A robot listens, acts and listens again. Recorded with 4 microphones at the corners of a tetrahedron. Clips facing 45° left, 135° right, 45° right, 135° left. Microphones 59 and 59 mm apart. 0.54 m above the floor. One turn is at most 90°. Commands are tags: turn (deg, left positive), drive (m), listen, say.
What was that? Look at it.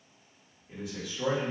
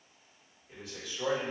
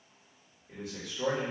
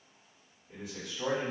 <turn deg="-50"/>
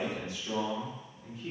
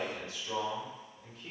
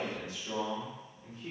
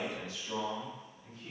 <turn deg="-20"/>
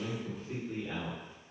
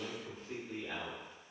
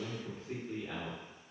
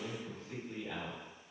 <turn deg="-25"/>
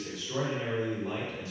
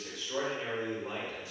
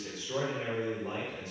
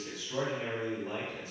<turn deg="-40"/>
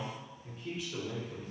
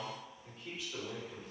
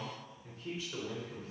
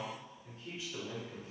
<turn deg="-30"/>
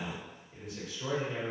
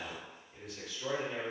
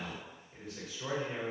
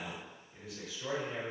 <say>Facing the man speaking.</say>